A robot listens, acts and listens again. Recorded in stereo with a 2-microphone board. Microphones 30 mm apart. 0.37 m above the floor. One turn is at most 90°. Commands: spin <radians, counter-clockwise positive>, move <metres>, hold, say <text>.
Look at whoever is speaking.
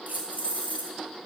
hold
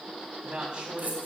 spin -0.61
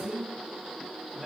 say Found it: a man speaking, straight ahead.